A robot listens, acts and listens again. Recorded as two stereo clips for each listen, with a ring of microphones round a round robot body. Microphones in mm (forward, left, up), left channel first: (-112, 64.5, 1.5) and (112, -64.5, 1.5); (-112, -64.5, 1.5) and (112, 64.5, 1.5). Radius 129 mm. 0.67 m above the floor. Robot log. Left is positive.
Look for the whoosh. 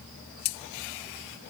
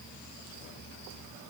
cmd idle
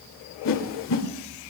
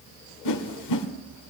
note: The whoosh: 165° right.
cmd yaw -165
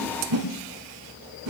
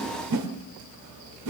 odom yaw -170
end: Found it: a whoosh, straight ahead, 1 to 2 m away.